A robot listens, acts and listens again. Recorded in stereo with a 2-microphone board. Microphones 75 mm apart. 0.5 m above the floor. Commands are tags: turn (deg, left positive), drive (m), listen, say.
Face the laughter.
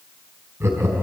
<turn deg="-35"/>
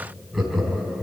<say>Facing the laughter.</say>